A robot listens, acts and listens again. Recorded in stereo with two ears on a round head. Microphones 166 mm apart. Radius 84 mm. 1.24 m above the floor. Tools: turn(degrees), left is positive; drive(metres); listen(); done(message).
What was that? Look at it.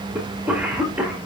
turn(degrees=-30)
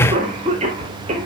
turn(degrees=-140)
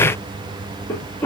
turn(degrees=15)
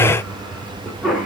done("Found it: a cough, straight ahead.")